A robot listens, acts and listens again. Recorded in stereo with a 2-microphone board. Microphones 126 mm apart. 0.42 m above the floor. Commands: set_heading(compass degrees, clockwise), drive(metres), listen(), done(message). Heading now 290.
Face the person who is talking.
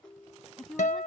set_heading(260)
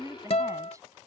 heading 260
set_heading(285)
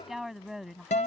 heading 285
done("Found it: a woman speaking, straight ahead.")